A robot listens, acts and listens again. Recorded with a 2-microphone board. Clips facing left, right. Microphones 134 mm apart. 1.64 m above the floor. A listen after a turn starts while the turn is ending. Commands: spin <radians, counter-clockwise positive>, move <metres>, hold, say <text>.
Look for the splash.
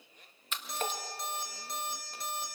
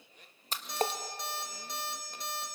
spin -0.61
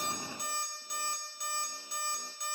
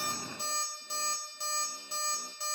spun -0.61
hold
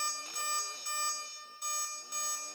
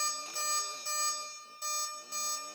say I heard a splash, but can't make it out now. It was about straight ahead or 110° right.